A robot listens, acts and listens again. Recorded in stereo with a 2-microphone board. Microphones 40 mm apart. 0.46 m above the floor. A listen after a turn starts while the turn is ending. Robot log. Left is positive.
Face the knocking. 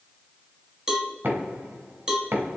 note: The knocking: about 70° right or 110° right.
cmd yaw -70
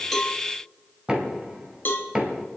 note: So it is at 15° right.
cmd yaw -15
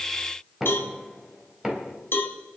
end: Facing the knocking, 2 to 4 m away.